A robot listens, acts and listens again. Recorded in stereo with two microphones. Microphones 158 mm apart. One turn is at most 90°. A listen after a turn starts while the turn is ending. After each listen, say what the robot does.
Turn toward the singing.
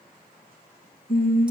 Turn 65° left.
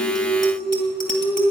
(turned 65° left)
Turn 10° left.
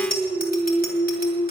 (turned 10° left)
Turn 15° left.
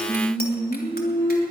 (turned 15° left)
Turn 15° left.
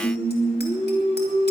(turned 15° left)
Turn 10° left.
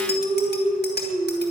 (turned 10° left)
Found it: singing, straight ahead, 2 to 4 m away.